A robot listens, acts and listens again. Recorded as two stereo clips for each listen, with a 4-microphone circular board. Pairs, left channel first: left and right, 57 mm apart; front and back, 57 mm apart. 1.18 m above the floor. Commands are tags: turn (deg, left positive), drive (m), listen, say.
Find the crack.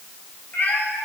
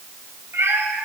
<listen/>
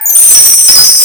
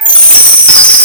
<listen/>
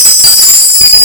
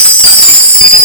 <say>I can't make out a crack to turn to.</say>